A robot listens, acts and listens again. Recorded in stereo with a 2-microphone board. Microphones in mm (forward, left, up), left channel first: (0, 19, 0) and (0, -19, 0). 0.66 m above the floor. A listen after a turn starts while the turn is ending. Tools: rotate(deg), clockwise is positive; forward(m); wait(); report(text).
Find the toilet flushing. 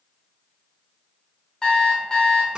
wait()
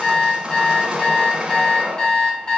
wait()
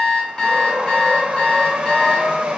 report("I can't make out a toilet flushing to turn to.")